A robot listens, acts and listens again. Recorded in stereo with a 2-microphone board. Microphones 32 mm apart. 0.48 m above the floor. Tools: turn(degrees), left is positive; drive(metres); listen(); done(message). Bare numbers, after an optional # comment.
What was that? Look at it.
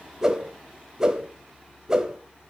# The whoosh: about 20° right or 160° right.
turn(-20)
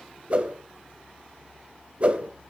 # So it is at 140° right.
turn(-140)
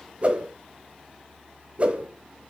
# The whoosh is now 40° right.
turn(-40)
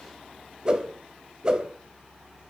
# The whoosh is now 30° right.
turn(-30)
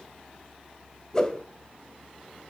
# The whoosh is now 20° left.
turn(20)
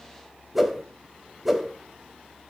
done("Found it: a whoosh, straight ahead.")